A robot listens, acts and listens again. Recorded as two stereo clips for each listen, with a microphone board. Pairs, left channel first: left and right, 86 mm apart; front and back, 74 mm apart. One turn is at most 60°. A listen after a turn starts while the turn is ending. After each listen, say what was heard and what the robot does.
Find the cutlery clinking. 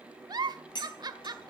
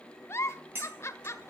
The cutlery clinking: 120° left. Turn 60° left.
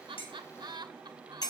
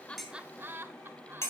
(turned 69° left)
The cutlery clinking is now 50° left. Turn 50° left.
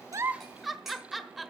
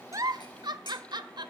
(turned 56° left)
Keep listening.
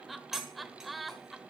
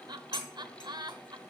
Found it: cutlery clinking, straight ahead, 2 to 4 m away.